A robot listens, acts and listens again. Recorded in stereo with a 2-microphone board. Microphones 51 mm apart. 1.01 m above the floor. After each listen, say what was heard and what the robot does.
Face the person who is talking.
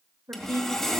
The woman speaking: about 65° right or 115° right. Turn 65° right.
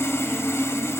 Keep listening.
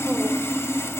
Keep listening.
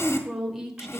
So it is at 10° right. Turn 10° right.
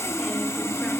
Keep listening.
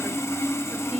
Keep listening.
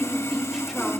Facing where the woman speaking came from. I can't hear it now.